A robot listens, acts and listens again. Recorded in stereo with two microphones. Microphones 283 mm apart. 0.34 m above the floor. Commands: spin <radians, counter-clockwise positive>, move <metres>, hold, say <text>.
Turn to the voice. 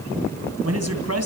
spin -1.05
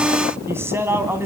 spin -0.17
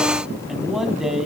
say Facing the man speaking, 2 to 4 m away.